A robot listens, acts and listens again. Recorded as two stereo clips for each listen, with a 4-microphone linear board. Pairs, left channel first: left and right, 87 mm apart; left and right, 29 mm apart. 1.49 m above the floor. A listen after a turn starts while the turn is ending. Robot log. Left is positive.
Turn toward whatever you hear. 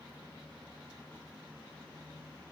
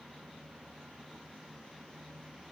cmd idle
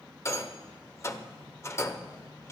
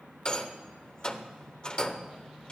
note: The rattle: about 30° left or 150° left.
cmd yaw +30
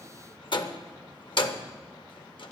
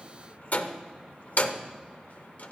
note: So it is at 115° left.
cmd yaw +115
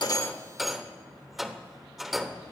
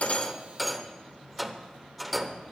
end: Found it: a rattle, straight ahead, under 1 m away.